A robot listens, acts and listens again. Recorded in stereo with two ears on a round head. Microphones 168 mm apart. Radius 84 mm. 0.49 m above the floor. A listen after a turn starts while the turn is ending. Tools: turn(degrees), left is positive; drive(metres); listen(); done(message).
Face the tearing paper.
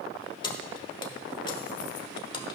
listen()
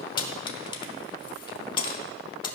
listen()
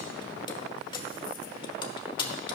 done("I can't make out tearing paper, only keys jangling.")